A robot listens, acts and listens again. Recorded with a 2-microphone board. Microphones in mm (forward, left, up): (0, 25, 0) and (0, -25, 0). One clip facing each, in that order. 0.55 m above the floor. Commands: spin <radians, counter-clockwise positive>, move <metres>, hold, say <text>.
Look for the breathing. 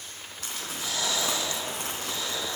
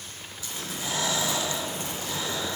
spin -0.52
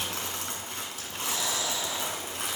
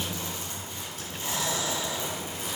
spin -1.92
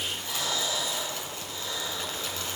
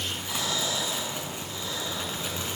say Facing the breathing, 2 to 4 m away.